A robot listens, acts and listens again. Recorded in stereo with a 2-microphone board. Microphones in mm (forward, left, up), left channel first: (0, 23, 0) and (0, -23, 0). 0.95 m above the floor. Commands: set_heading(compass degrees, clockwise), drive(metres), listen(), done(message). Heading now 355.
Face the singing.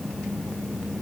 listen()
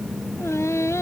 set_heading(265)
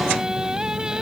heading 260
set_heading(275)
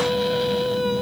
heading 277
done("Facing the singing.")